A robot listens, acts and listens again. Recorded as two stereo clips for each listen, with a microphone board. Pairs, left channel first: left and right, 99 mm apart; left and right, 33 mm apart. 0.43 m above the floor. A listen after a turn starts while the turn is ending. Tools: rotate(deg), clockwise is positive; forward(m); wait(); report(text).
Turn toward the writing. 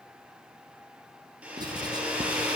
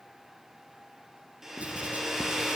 rotate(45)
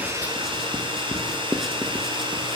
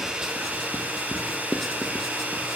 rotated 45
report("Facing the writing, 1 to 2 m away.")